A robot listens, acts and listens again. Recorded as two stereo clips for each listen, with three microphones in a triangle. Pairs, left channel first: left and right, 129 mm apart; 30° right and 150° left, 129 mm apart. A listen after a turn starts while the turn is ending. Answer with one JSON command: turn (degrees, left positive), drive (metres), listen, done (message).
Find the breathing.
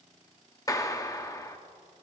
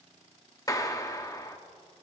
{"listen": true}
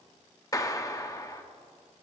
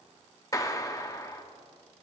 {"listen": true}
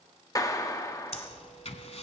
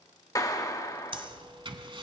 {"turn": 110}
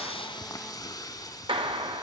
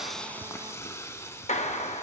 {"listen": true}
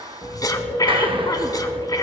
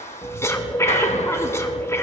{"turn": 35}
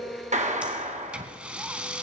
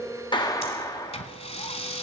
{"turn": -10}
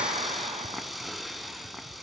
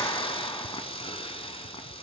{"listen": true}
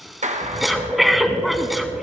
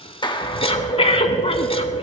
{"done": "Facing the breathing, 1 to 2 m away."}